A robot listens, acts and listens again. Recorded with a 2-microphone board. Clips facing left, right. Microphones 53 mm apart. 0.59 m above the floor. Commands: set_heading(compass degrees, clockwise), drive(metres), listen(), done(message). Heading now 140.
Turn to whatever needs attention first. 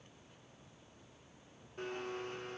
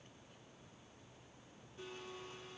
listen()
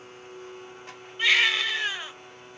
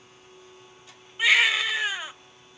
set_heading(170)
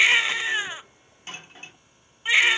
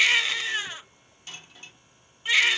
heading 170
set_heading(150)
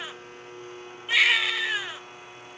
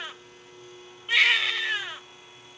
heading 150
done("Facing the baby crying, under 1 m away.")